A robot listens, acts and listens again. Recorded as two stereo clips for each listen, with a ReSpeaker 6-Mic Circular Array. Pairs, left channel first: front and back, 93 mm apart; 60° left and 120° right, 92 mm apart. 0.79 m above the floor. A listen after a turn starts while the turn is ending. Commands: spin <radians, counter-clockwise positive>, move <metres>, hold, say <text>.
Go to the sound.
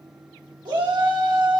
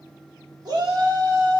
spin -2.71
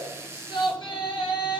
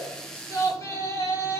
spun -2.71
spin 0.17
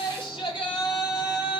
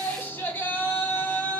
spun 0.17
move 1.0
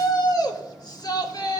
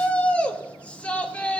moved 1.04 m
spin -0.17
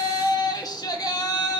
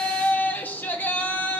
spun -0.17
move 1.0
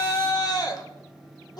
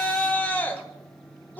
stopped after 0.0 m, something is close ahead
say I am next to the shout.